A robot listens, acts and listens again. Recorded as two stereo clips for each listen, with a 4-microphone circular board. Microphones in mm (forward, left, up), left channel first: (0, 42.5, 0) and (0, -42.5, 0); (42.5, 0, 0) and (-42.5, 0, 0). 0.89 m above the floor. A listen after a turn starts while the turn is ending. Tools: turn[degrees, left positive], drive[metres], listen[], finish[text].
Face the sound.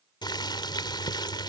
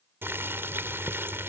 Thought: The boiling: 120° left.
Action: turn[120]
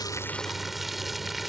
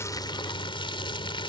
Action: finish[Found it: boiling, straight ahead.]